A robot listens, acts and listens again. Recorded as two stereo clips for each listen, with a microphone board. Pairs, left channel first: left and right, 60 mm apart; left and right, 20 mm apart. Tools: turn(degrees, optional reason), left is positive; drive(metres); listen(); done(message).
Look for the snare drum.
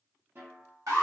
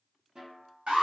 turn(degrees=-35, reason="The snare drum: about 35° right or 145° right.")
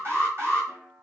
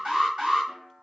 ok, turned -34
turn(degrees=-110, reason="So it is at 110° right.")
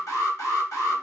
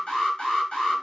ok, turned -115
listen()
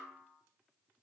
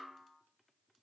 done("Found it: a snare drum, straight ahead, under 1 m away.")